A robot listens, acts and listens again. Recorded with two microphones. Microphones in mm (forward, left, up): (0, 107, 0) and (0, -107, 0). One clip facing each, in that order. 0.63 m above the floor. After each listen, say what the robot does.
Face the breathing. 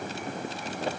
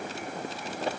Keep listening.
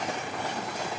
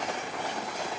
Keep listening.
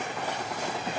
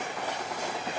I can't make out breathing to turn to.